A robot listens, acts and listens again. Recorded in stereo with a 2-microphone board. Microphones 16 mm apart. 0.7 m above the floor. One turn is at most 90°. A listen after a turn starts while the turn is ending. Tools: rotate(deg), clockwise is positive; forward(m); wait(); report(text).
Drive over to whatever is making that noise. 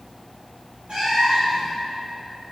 rotate(90)
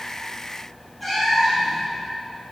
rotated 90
forward(1.0)
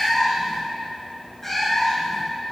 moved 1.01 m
rotate(-15)
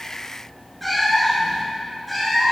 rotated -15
forward(1.0)
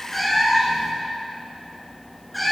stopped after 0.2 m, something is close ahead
report("Arrived at the cat meowing, straight ahead.")